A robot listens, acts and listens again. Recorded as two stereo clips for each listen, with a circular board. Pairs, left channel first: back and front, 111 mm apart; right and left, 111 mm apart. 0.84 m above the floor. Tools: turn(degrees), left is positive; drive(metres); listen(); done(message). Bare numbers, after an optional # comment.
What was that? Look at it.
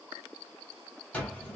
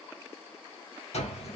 # The cupboard door: 100° right.
turn(-100)
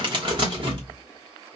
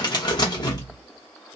# The cupboard door is now 40° right.
turn(-40)
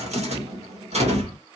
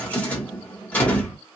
# The cupboard door is now 15° right.
turn(-15)
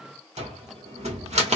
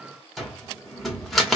done("Facing the cupboard door.")